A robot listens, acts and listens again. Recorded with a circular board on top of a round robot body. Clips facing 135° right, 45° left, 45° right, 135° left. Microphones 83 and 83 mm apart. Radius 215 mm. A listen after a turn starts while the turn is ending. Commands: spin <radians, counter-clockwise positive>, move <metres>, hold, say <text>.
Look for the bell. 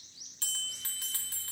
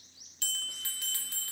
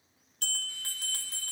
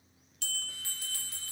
spin -1.48
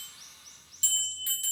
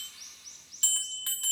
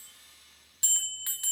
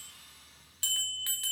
spin 0.44
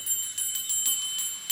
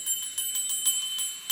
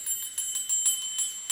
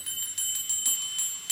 say Facing the bell, 2 to 4 m away.